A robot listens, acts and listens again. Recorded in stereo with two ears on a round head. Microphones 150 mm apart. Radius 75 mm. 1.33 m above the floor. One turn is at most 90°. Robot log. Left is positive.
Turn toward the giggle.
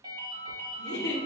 note: The giggle: about 70° left or 110° left.
cmd yaw +70
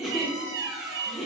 end: Found it: a giggle, straight ahead.